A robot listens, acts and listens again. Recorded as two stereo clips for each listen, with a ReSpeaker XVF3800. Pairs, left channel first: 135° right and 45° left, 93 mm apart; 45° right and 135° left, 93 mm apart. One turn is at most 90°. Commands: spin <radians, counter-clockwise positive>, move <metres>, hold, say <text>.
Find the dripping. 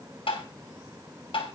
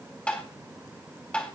hold
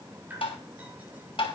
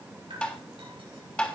spin 1.57
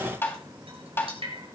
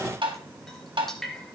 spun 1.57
spin 0.70
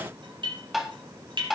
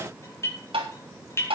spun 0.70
spin 0.26
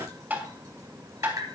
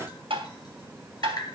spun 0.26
say Found it: dripping, straight ahead.